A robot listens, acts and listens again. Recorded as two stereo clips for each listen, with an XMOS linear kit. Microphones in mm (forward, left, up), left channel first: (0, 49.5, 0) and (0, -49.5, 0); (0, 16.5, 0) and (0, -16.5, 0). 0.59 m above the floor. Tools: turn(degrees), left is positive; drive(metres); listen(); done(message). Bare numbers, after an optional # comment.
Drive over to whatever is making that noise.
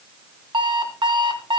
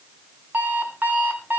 # The alarm clock: about 55° right or 125° right.
turn(-55)
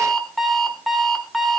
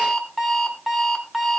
drive(1.0)
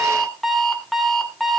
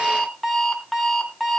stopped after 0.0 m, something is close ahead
done("Blocked. The alarm clock is further on, straight ahead.")